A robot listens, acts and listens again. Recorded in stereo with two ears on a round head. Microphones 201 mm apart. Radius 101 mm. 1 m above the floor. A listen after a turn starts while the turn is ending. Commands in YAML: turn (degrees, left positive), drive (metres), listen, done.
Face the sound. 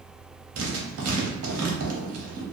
turn: -70
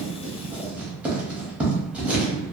done: "Facing the writing."